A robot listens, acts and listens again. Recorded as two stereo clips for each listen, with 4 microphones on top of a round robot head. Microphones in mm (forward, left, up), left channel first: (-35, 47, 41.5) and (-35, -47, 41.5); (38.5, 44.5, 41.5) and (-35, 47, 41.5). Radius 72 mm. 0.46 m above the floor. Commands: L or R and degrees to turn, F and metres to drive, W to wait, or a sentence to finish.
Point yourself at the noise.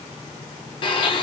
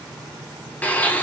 L65
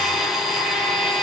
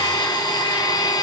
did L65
Facing the blender, under 1 m away.